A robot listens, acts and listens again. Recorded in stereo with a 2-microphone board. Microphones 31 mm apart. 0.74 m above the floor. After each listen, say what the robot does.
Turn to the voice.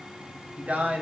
Turn 50° right.
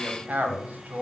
Turn 75° right.
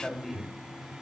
Turn 10° right.
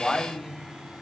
Facing the man speaking, 2 to 4 m away.